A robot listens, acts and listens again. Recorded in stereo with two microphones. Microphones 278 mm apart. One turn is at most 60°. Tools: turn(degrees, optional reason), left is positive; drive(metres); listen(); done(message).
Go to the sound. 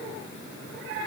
listen()
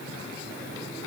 listen()
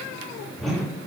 turn(degrees=30)
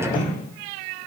turn(degrees=60, reason="So it is at 150° left.")
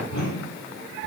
turn(degrees=60, reason="The whoosh is now 75° left.")
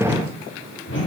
turn(degrees=45, reason="The whoosh is now 45° left.")
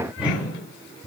drive(metres=1.0)
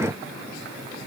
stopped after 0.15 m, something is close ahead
listen()
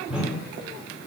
done("Something is in my way. I am facing the whoosh but have not reached it.")